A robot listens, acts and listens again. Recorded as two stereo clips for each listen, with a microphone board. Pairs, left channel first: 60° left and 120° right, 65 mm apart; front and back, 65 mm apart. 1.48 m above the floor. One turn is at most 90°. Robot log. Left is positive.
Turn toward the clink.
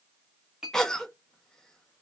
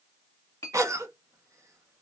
note: The clink: 45° right.
cmd yaw -45
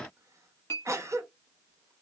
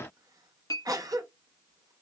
note: The clink is now 15° left.
cmd yaw +15
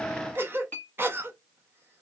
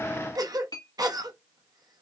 end: Found it: a clink, straight ahead.